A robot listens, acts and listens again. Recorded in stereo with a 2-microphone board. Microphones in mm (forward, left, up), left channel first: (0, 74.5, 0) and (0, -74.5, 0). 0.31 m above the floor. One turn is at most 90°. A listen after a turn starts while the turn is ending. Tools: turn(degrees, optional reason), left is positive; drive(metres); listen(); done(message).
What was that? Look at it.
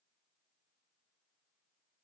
listen()
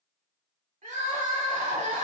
turn(degrees=-55, reason="The crying: about 55° right or 125° right.")
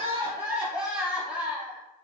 done("Facing the crying, under 1 m away.")